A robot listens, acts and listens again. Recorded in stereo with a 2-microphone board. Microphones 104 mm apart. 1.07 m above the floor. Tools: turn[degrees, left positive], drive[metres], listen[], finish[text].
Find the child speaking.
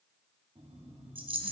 Action: listen[]
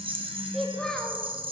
Action: turn[30]
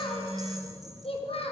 Thought: So it is at 110° left.
Action: turn[110]
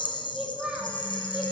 Thought: The child speaking is now 10° right.
Action: turn[-10]
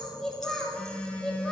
Action: finish[Facing the child speaking, 1 to 2 m away.]